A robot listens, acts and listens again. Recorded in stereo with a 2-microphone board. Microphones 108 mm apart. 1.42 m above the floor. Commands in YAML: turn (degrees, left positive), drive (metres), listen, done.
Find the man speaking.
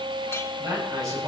turn: -30
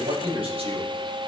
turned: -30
turn: -120
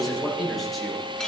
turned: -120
done: "Facing the man speaking."